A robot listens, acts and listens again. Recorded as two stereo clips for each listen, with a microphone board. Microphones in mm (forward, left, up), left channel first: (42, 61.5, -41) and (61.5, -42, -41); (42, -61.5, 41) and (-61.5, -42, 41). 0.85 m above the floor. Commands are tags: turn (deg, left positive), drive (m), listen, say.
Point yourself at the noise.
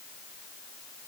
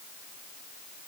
<listen/>
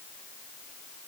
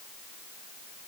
<listen/>
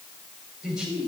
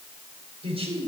<turn deg="-165"/>
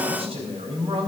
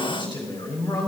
<turn deg="-55"/>
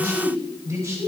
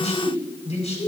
<turn deg="-20"/>
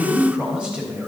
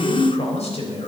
<say>Facing the man speaking, 2 to 4 m away.</say>